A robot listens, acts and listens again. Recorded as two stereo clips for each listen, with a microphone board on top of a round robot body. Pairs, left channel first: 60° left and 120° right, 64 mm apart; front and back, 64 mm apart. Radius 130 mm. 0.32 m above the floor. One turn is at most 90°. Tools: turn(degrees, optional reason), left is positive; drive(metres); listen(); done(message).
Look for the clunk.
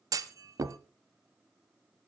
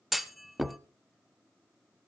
turn(degrees=-90, reason="The clunk: 95° right.")
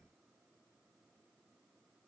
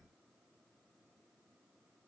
done("Facing where the clunk came from. I can't hear it now.")